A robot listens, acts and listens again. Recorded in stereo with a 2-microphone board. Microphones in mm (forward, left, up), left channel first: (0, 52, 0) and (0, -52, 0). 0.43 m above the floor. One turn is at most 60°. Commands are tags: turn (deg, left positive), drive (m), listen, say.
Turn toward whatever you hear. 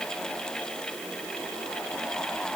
<listen/>
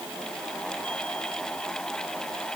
<listen/>
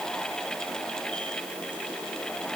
<say>I can't make out anything.</say>